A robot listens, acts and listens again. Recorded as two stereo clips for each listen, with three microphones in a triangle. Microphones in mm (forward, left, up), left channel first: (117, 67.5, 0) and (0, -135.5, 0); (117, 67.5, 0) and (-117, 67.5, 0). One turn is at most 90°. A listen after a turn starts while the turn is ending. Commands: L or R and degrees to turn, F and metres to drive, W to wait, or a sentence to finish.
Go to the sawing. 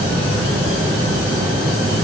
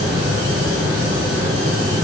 W
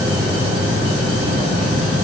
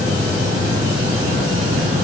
W
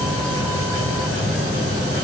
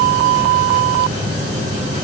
I can't make out sawing to turn to.